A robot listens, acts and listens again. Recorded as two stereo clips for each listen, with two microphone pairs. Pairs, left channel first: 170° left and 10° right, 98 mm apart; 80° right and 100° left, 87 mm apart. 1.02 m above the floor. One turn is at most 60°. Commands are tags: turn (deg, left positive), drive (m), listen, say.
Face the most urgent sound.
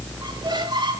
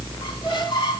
<listen/>
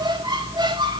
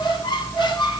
<listen/>
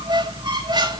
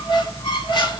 <say>I can't make out anything urgent to turn to.</say>